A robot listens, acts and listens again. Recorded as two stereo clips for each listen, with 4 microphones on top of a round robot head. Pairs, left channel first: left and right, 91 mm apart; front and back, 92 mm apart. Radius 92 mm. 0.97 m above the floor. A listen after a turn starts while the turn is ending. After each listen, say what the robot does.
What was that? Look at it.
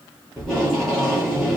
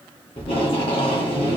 Facing the tape being pulled.